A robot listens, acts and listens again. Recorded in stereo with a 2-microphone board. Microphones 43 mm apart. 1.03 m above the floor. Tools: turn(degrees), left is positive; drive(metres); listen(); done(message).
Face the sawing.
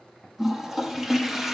listen()
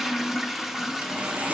turn(degrees=-40)
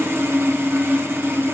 turn(degrees=-100)
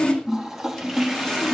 turn(degrees=20)
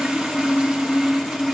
done("Facing the sawing, 1 to 2 m away.")